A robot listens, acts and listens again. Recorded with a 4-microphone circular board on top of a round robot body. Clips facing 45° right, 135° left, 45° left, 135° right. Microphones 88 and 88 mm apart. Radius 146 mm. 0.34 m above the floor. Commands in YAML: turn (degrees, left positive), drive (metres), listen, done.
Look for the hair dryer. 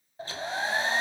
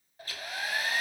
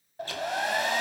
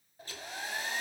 turn: 20
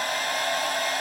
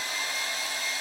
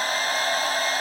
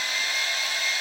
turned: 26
done: "Found it: a hair dryer, straight ahead."